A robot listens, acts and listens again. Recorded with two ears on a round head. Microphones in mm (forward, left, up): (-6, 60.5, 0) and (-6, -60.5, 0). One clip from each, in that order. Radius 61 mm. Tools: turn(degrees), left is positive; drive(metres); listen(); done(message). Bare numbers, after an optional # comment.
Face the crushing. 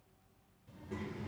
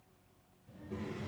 listen()
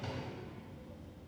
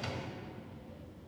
listen()
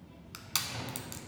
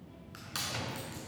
turn(90)
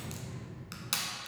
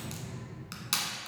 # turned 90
done("Facing the crushing.")